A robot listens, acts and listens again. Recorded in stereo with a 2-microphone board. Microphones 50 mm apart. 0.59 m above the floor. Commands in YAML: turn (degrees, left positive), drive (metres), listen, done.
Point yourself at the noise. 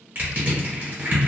turn: -35
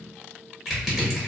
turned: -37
done: "Facing the crushing."